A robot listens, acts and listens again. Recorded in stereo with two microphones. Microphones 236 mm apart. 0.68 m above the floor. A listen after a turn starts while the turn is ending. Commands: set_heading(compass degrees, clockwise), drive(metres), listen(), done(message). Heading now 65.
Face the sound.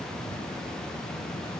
listen()
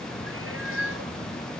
set_heading(130)
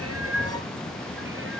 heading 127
listen()
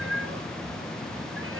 set_heading(187)
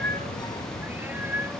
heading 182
set_heading(192)
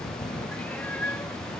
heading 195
done("Facing the cat meowing.")